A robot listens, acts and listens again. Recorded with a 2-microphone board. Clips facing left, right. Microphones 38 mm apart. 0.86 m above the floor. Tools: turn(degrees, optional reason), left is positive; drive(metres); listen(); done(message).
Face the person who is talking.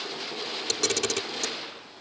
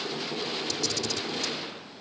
listen()
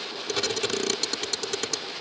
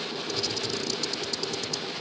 listen()
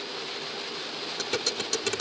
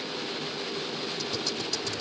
done("I can't make out anyone speaking to turn to.")